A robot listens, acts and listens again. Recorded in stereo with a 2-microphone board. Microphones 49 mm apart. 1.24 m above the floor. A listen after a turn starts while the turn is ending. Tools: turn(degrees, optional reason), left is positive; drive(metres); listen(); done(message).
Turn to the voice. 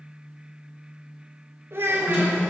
turn(degrees=-50, reason="The child speaking: about 50° right or 130° right.")
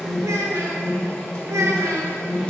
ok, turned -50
turn(degrees=-80, reason="So it is at 80° right.")
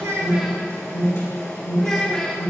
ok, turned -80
turn(degrees=10, reason="The child speaking is now 10° left.")
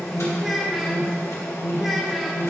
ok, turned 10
done("Found it: a child speaking, straight ahead, under 1 m away.")